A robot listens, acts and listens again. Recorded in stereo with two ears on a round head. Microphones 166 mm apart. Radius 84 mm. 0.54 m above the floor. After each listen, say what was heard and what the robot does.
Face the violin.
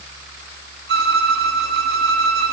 The violin: about 65° right or 115° right. Turn 65° right.
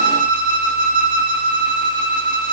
So it is at 50° right. Turn 50° right.
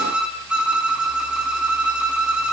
Found it: a violin, straight ahead, 2 to 4 m away.